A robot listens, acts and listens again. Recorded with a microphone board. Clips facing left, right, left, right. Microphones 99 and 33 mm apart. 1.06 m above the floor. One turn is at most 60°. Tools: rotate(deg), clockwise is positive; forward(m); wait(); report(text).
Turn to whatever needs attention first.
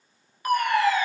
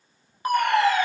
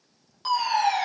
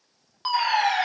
rotate(25)
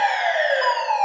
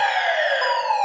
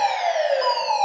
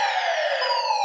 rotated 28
report("Facing the fire alarm.")